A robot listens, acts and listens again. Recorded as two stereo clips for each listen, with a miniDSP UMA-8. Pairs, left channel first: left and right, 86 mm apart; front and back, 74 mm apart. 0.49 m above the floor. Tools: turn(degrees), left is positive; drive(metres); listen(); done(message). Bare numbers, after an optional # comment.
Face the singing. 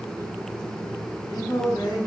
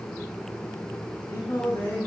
# The singing: 55° left.
turn(55)
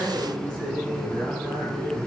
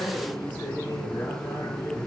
# The singing is now 10° left.
turn(10)
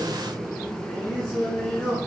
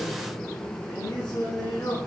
# The singing is now 10° left.
turn(10)
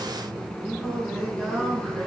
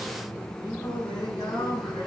# The singing is now 10° left.
turn(10)
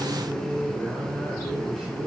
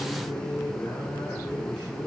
done("Found it: singing, straight ahead.")